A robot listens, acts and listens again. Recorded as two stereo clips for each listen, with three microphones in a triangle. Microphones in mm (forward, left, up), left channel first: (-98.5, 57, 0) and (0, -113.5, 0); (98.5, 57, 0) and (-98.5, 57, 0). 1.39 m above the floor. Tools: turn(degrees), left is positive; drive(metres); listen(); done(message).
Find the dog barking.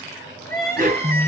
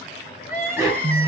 turn(degrees=-105)
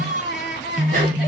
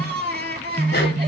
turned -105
listen()
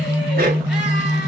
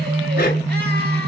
turn(degrees=-25)
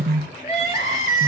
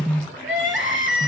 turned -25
listen()
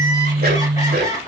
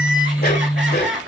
turn(degrees=-30)
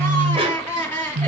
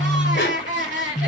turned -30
done("Facing the dog barking.")